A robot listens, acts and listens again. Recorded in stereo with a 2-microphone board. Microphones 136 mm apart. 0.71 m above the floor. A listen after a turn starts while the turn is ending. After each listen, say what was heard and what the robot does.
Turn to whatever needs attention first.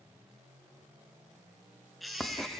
Turn 30° left.
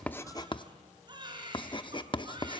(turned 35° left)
So it is at 35° right. Turn 35° right.
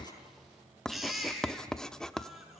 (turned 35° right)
Found it: a baby crying, straight ahead.